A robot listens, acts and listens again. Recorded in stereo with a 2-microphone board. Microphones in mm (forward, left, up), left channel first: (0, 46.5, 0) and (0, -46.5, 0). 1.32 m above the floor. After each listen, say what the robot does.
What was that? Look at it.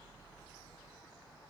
Keep listening.
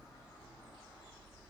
Keep listening.
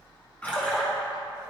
Turn 15° left.
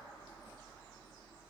Keep listening.
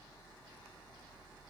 I heard a splash, but can't make it out now. It was about straight ahead or 150° left.